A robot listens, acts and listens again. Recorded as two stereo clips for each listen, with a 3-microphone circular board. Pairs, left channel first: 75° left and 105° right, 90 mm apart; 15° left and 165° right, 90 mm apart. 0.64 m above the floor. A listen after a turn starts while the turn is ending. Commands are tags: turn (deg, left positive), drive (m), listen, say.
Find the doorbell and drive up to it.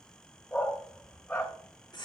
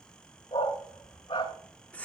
<listen/>
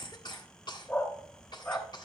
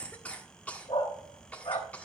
<listen/>
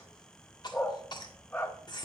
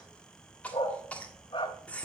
<say>I can't make out a doorbell to turn to.</say>